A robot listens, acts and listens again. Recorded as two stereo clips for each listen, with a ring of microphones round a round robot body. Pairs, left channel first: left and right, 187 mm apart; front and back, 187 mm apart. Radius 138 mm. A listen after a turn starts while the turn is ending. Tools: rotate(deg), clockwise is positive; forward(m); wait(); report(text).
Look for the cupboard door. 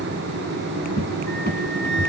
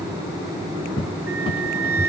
rotate(-60)
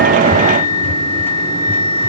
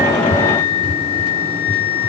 rotate(-10)
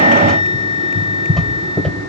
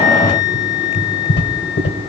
report("Facing the cupboard door.")